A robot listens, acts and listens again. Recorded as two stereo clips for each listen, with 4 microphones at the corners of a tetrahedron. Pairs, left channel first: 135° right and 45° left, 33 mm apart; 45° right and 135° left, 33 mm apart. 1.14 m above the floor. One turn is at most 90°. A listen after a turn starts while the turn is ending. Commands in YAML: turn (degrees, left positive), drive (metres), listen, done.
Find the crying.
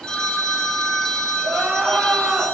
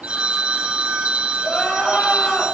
turn: 25
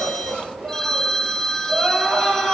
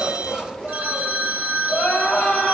done: "Facing the crying."